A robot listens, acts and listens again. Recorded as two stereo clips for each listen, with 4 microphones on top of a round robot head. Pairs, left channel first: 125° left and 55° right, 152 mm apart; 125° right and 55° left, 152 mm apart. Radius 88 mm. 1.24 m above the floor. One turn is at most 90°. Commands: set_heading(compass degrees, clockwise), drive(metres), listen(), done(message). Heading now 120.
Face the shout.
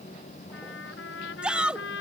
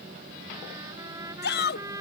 set_heading(210)
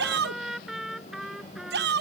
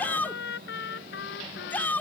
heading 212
set_heading(257)
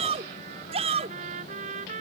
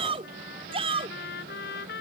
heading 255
done("Facing the shout.")